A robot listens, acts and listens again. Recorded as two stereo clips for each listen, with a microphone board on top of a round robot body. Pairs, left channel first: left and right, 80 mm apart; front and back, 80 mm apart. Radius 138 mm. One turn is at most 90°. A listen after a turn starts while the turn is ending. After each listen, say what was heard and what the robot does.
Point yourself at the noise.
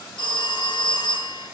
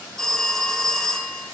The phone ringing: 85° left. Turn 85° left.
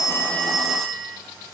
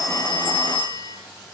Found it: a phone ringing, straight ahead.